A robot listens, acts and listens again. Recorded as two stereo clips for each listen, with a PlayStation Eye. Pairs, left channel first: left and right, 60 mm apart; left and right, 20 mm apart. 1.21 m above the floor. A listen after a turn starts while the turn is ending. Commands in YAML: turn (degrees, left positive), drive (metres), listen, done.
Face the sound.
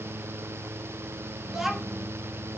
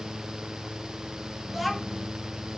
turn: -30
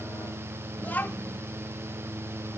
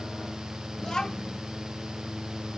turn: 25
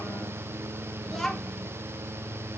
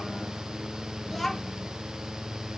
done: "Found it: a child speaking, straight ahead, 1 to 2 m away."